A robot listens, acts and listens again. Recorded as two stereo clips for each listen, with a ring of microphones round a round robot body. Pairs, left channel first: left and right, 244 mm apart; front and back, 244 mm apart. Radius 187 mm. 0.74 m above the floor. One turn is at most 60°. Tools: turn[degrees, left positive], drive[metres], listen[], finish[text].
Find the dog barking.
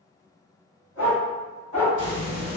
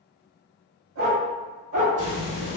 Thought: The dog barking: 160° left.
Action: turn[60]
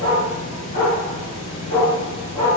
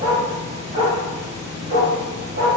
Thought: The dog barking is now 140° left.
Action: turn[60]
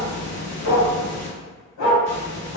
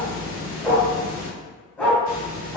Thought: The dog barking is now 85° left.
Action: turn[60]
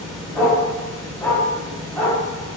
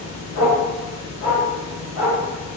Action: finish[Facing the dog barking, 1 to 2 m away.]